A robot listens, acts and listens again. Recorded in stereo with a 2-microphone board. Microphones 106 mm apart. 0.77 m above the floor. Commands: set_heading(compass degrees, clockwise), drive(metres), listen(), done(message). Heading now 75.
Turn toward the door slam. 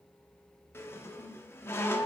listen()
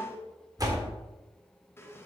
set_heading(110)
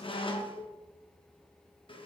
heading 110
listen()
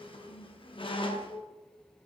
done("I heard a door slam, but can't make it out now. It was about straight ahead or 110° right.")